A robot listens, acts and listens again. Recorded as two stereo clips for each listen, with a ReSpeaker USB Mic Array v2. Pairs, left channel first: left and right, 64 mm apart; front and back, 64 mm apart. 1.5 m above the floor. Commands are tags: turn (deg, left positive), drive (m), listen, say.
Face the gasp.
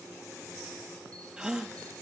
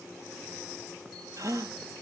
<turn deg="-165"/>
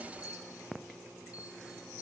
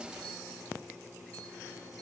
<say>Facing where the gasp came from. I can't hear it now.</say>